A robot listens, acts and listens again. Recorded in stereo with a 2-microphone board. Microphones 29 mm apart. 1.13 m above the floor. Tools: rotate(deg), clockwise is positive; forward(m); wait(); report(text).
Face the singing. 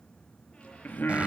rotate(-90)
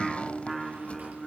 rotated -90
report("Found it: singing, straight ahead.")